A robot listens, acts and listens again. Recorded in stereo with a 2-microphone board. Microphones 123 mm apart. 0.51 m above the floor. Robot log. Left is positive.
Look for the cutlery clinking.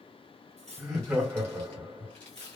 note: The cutlery clinking: about 60° right or 120° right.
cmd yaw -60
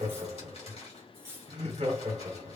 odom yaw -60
note: So it is at 20° right.
cmd yaw -20
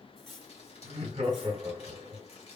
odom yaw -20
end: Facing the cutlery clinking, under 1 m away.